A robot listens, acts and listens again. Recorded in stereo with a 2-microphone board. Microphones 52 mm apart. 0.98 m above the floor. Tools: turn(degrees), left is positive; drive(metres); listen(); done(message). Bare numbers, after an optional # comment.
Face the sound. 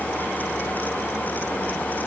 listen()
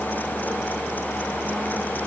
listen()
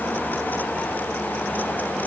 done("I can't make out anything to turn to.")